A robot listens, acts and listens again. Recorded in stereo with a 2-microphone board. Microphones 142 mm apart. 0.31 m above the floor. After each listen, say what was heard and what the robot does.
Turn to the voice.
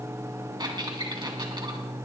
Keep listening.
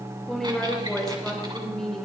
Turn 30° left.
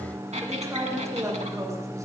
So it is at 25° right. Turn 25° right.
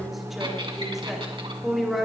Found it: a woman speaking, straight ahead.